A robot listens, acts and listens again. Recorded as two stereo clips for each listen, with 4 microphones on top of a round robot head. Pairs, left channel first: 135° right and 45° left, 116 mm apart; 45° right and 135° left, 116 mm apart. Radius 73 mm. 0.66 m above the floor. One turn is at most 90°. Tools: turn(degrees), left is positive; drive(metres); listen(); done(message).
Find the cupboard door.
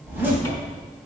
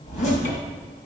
turn(degrees=-70)
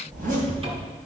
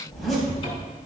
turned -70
done("Found it: a cupboard door, straight ahead.")